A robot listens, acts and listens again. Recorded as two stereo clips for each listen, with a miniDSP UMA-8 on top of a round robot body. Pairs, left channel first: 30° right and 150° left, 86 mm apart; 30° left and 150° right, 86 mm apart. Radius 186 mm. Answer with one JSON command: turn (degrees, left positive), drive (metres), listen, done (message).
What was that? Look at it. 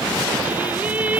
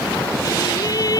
{"turn": 80}
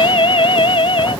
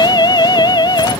{"turn": -10}
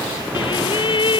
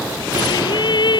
{"done": "Facing the singing."}